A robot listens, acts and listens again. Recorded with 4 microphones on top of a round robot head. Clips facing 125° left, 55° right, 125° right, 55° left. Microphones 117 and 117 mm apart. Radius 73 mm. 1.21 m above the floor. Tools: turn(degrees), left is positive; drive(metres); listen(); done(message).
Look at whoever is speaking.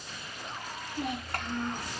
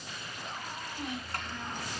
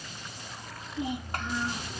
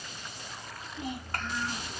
turn(degrees=160)
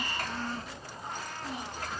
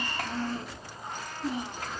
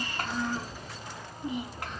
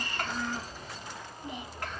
turn(degrees=-45)
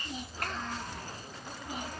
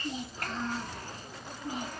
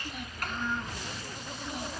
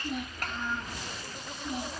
turn(degrees=10)
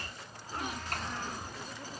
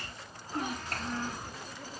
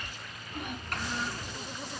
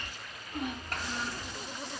done("Facing the child speaking, 2 to 4 m away.")